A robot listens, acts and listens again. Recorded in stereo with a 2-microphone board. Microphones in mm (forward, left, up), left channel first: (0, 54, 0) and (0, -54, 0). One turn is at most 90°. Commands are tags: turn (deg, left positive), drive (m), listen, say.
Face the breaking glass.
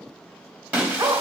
<turn deg="-30"/>
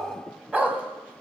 <listen/>
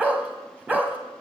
<say>I heard breaking glass, but can't make it out now. It was about 15° left or 135° right.</say>